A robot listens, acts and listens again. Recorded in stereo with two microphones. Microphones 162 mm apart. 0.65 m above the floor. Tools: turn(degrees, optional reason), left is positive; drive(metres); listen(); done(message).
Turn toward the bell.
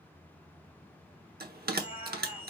turn(degrees=-75, reason="The bell: about 75° right or 105° right.")
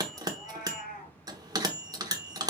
turn(degrees=-25, reason="So it is at 25° right.")
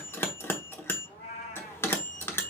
turn(degrees=15, reason="The bell is now 15° left.")
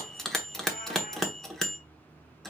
done("Facing the bell.")